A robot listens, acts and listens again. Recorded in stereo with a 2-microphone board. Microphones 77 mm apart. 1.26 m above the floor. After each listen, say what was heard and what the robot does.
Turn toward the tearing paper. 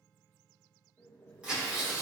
Turn 30° right.
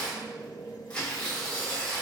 So it is at 10° left. Turn 10° left.
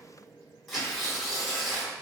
Found it: tearing paper, straight ahead, 1 to 2 m away.